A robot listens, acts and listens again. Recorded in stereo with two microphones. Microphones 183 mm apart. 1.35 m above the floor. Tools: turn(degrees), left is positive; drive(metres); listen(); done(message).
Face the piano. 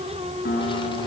turn(degrees=70)
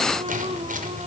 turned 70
listen()
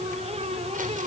listen()
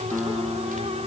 done("Found it: a piano, straight ahead.")